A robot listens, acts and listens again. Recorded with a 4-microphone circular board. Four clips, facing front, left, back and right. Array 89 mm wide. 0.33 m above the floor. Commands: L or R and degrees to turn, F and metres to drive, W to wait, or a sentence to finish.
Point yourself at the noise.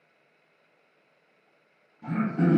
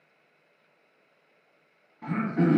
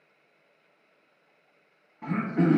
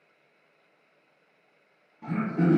L160
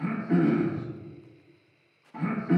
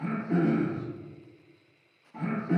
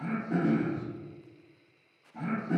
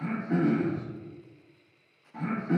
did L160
Found it: throat clearing, straight ahead, under 1 m away.